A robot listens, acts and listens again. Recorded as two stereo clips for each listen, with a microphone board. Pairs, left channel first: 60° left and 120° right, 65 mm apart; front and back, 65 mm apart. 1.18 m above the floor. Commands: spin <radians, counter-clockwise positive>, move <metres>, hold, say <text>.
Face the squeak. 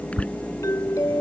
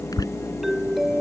spin -0.17
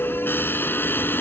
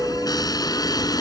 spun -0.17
say Found it: a squeak, straight ahead.